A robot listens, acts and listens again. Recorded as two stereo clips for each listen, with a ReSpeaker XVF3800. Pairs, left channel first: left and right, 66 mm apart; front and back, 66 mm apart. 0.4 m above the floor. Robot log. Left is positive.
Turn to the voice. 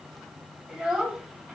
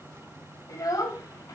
note: The child speaking: 15° right.
cmd yaw -15
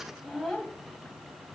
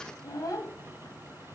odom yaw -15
end: Found it: a child speaking, straight ahead, 2 to 4 m away.